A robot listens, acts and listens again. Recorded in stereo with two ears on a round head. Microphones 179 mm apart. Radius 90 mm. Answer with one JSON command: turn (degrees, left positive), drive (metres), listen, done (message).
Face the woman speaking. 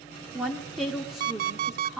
{"turn": 30}
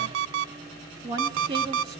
{"turn": -30}
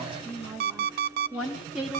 {"done": "Found it: a woman speaking, straight ahead."}